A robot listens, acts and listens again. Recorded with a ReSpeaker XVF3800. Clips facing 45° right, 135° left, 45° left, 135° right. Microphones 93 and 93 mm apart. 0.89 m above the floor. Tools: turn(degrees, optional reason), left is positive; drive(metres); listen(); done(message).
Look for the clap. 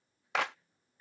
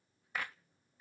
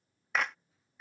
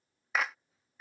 turn(degrees=-50, reason="The clap: 50° right.")
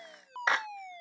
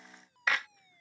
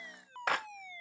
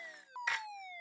turn(degrees=15, reason="The clap is now 15° left.")
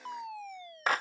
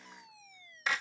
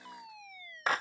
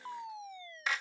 done("Facing the clap.")